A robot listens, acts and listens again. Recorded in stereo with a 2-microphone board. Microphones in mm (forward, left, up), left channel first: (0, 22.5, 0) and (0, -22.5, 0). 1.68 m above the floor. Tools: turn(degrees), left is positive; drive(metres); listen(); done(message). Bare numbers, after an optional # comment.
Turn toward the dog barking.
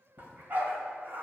# The dog barking: about 40° right or 140° right.
turn(-40)
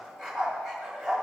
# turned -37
done("Found it: a dog barking, straight ahead.")